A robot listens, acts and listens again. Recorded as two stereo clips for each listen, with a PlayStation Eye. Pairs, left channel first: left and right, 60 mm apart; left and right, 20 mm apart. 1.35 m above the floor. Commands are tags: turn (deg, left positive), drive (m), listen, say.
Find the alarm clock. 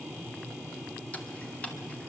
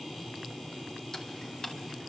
<listen/>
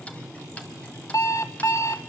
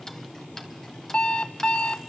<turn deg="55"/>
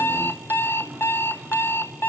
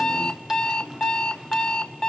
<turn deg="50"/>
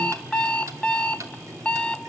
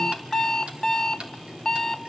<turn deg="20"/>
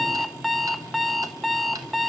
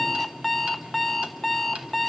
<say>Found it: an alarm clock, straight ahead, under 1 m away.</say>